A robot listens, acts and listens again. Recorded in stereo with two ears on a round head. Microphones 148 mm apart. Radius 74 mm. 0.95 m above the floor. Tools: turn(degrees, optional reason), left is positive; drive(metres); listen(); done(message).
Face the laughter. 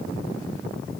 listen()
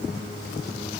listen()
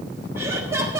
turn(degrees=-15, reason="The laughter: about 15° right or 165° right.")
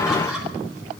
listen()
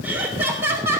turn(degrees=-15, reason="The laughter: about 15° right or 165° right.")
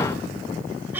turn(degrees=-30)
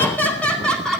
done("Facing the laughter, 2 to 4 m away.")